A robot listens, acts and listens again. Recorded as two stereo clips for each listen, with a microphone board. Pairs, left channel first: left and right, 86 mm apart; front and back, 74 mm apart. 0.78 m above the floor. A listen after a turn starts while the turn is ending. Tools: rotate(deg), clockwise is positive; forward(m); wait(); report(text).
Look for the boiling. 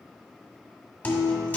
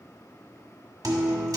wait()
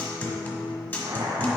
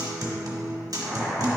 rotate(80)
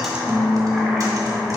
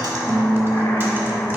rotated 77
wait()
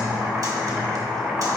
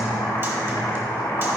report("Facing the boiling.")